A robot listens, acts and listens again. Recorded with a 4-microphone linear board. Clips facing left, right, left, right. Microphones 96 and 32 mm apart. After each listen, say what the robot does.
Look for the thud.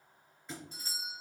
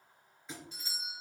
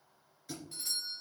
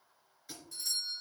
Turn 30° left.
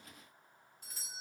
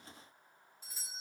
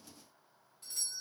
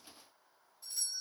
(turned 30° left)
Keep listening.
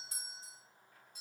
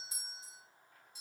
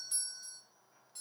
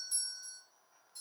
I heard a thud, but can't make it out now. It was about 30° right or 150° left.